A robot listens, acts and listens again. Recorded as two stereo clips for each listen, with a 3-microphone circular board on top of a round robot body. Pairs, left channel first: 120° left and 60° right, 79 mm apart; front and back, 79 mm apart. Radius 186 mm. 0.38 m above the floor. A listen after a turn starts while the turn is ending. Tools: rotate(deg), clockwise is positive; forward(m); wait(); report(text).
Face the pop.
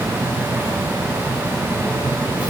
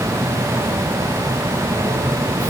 wait()
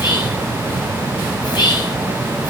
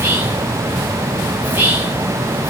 wait()
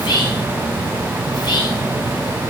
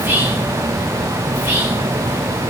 report("I can't make out a pop, only whispering.")